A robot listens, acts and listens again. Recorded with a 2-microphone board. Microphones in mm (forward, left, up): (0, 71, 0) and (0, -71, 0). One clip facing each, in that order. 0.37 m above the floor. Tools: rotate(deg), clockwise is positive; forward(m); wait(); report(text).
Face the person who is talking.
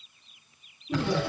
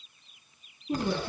rotate(35)
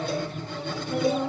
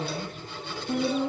rotate(105)
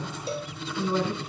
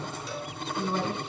rotate(10)
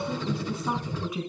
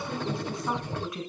report("Facing the woman speaking, over 4 m away.")